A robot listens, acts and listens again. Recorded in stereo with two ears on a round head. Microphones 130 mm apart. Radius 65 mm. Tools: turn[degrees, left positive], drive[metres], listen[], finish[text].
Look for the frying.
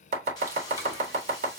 Thought: The frying: about 30° left or 150° left.
Action: turn[30]
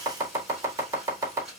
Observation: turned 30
Action: finish[Facing the frying, 2 to 4 m away.]